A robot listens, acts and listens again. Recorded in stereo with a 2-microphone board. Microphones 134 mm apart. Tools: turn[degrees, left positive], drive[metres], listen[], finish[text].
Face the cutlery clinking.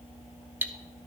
Action: turn[-30]
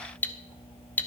Thought: So it is at 15° left.
Action: turn[15]
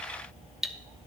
Action: finish[Facing the cutlery clinking.]